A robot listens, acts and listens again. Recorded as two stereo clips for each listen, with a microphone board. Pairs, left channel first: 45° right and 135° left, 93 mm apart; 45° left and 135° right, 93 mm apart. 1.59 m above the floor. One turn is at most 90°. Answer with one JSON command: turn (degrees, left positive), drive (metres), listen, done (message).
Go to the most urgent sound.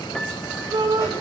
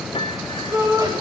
{"turn": 90}
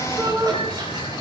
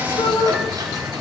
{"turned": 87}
{"turn": 80}
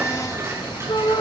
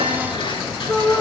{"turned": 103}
{"turn": -20}
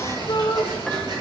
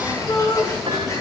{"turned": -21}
{"drive": 1.0}
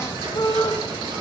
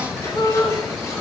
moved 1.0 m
{"drive": 1.0}
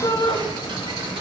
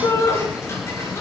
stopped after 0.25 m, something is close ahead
{"done": "Something is in my way. I am facing the shout but have not reached it."}